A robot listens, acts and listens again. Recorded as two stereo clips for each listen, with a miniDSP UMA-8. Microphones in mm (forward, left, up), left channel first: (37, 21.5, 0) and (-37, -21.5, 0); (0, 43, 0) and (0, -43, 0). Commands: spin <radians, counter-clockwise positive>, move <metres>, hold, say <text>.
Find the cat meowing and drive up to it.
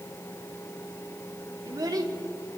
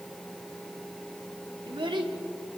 hold
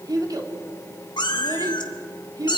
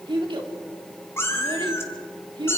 spin 0.61
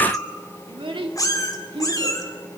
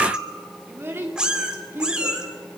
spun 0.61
spin -0.17
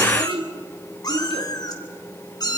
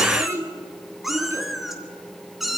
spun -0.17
move 1.0
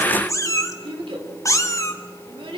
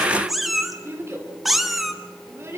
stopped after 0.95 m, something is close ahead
say Arrived at the cat meowing, straight ahead.